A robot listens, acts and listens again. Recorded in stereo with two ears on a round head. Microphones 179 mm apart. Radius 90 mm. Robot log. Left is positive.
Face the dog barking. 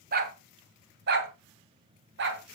note: The dog barking: about 60° right or 120° right.
cmd yaw -60
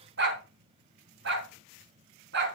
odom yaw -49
note: So it is at 55° right.
cmd yaw -55
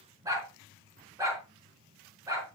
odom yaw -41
note: The dog barking is now 15° right.
cmd yaw -15
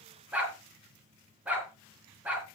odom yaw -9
end: Found it: a dog barking, straight ahead.